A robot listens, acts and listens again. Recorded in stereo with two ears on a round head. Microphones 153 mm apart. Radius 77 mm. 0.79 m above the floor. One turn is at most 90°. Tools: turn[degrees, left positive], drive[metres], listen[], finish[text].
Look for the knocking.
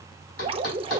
Action: turn[90]
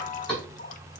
Action: finish[Found it: knocking, straight ahead, 2 to 4 m away.]